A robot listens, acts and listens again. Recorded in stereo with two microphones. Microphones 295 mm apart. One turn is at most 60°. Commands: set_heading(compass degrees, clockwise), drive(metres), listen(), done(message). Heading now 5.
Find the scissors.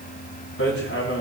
listen()
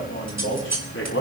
set_heading(65)
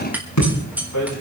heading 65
done("Found it: scissors, straight ahead.")